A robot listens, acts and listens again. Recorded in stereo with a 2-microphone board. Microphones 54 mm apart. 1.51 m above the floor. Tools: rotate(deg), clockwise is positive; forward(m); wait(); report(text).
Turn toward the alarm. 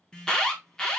rotate(-15)
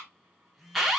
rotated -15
report("Found it: an alarm, straight ahead, 1 to 2 m away.")